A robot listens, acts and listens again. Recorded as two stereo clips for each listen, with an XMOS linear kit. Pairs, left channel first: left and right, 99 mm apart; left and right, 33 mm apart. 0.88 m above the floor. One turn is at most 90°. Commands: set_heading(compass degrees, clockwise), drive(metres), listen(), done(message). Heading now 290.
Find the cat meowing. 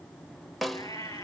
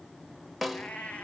set_heading(245)
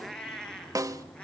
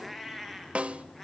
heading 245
set_heading(235)
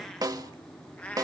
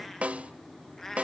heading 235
set_heading(220)
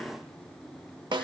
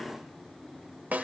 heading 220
listen()
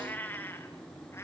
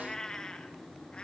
set_heading(195)
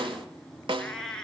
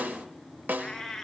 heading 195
set_heading(185)
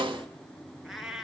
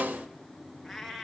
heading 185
done("Facing the cat meowing.")